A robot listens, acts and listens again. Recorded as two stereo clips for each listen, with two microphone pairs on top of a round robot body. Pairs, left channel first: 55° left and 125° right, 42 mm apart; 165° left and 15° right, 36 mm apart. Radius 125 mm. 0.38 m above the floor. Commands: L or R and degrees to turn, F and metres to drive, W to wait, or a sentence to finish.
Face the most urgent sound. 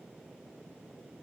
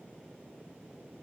W
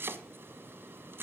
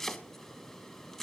W
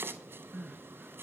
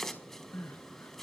L150
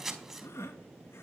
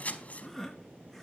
L80
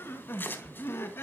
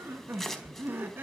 L15
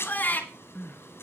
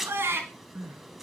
Found it: crying, straight ahead.